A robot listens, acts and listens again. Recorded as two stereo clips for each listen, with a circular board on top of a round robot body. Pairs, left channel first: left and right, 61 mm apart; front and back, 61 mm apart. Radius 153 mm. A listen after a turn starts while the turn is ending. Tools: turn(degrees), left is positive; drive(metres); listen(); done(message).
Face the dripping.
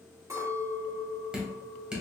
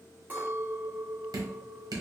turn(degrees=-165)
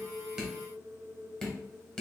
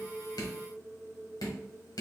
turn(degrees=15)
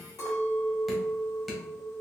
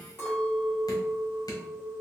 done("Found it: dripping, straight ahead.")